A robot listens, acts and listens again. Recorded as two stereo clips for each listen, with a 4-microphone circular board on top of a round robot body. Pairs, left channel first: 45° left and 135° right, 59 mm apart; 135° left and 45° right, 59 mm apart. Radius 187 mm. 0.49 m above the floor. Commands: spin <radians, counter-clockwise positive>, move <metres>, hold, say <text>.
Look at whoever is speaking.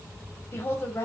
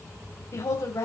spin 1.66
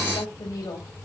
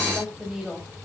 spin 0.70
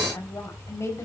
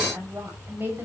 say Found it: a woman speaking, straight ahead.